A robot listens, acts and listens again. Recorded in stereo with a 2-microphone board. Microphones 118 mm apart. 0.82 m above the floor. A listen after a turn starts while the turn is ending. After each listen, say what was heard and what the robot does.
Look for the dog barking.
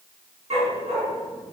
The dog barking: about 70° right or 110° right. Turn 70° right.
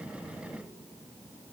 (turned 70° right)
Keep listening.
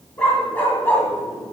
So it is at 15° left. Turn 15° left.
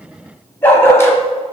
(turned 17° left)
The dog barking is now 25° left. Turn 25° left.
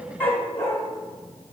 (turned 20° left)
The dog barking is now 20° left. Turn 20° left.
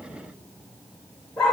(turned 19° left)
The dog barking is now 10° left. Turn 10° left.
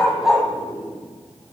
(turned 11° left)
Found it: a dog barking, straight ahead, 1 to 2 m away.